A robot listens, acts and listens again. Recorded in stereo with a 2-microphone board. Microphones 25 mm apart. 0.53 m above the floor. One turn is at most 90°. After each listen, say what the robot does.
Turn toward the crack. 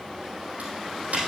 Turn 90° right.
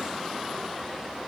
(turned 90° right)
Facing where the crack came from. I can't hear it now.